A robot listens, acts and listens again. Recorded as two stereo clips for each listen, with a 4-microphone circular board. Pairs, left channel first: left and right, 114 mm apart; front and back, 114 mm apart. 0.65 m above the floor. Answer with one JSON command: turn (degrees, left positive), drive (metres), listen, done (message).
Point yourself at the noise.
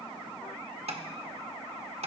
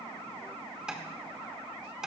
{"turn": -100}
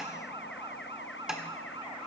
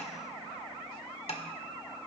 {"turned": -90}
{"done": "Found it: tapping, straight ahead, 1 to 2 m away."}